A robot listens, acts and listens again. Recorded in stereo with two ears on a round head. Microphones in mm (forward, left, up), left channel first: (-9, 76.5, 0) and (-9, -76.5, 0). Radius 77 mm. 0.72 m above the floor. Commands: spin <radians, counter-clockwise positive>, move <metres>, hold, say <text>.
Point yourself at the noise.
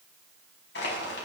spin 1.13
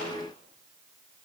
hold
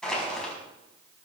say Facing the crushing, over 4 m away.